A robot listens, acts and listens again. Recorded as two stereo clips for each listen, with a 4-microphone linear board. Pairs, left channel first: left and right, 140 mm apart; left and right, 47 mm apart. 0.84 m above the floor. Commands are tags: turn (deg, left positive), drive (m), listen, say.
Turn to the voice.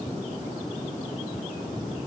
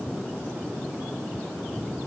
<listen/>
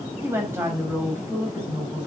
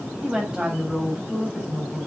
<turn deg="-20"/>
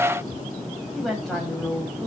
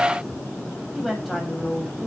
<say>Facing the woman speaking.</say>